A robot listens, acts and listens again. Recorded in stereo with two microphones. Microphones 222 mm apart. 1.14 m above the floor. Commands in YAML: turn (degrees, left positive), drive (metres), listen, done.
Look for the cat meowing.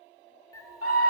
turn: 30
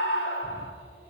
listen: true
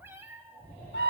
turn: -10
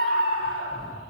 listen: true
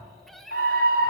done: "Found it: a cat meowing, straight ahead, 1 to 2 m away."